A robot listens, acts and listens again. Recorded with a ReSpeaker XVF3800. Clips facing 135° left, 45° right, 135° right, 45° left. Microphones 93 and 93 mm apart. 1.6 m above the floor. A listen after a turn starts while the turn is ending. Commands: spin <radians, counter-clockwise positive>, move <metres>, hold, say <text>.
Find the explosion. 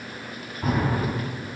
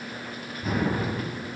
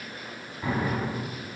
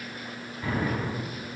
spin 2.79
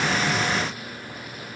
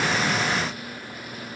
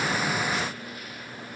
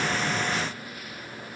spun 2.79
say I heard an explosion from this way, but can't make it out now.